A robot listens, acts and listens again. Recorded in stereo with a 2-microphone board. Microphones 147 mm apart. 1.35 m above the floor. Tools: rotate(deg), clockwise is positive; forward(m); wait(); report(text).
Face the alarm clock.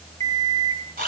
rotate(50)
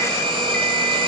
wait()
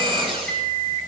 rotate(75)
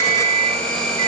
rotate(30)
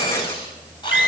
report("Facing the alarm clock, 2 to 4 m away.")